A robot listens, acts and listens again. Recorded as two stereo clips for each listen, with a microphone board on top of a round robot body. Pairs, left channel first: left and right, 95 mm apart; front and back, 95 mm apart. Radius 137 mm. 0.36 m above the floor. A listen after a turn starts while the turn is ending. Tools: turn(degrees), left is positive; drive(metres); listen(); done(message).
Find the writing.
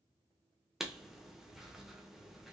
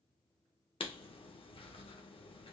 done("Found it: writing, straight ahead.")